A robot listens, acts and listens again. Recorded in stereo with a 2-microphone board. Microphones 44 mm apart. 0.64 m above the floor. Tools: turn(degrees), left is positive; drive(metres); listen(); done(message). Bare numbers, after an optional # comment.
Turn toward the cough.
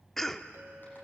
turn(30)
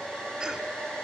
listen()
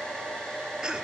# So it is at 20° right.
turn(-20)
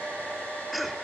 listen()
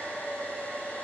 listen()
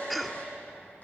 done("Facing the cough.")